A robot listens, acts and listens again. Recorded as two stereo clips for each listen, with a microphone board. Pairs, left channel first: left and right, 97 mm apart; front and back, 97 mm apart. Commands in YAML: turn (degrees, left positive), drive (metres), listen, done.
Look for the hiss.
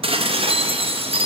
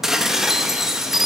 listen: true
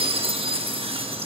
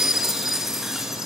listen: true
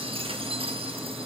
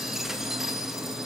done: "I can't make out a hiss to turn to."